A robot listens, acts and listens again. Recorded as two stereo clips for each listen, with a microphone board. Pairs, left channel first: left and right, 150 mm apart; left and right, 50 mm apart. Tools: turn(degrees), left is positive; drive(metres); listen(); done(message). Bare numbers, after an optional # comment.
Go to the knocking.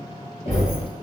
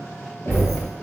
# The knocking: about 55° left or 125° left.
turn(55)
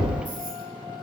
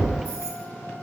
# So it is at 65° left.
turn(65)
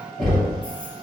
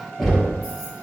drive(1.0)
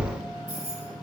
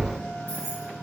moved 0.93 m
listen()
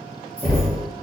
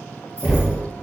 drive(1.0)
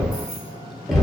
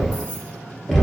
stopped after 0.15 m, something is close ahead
done("Arrived at the knocking, straight ahead.")